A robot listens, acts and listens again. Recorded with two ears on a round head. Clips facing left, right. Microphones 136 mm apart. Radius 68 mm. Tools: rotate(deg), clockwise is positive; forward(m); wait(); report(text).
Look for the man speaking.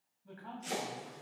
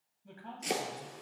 rotate(25)
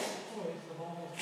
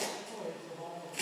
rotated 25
report("Facing the man speaking.")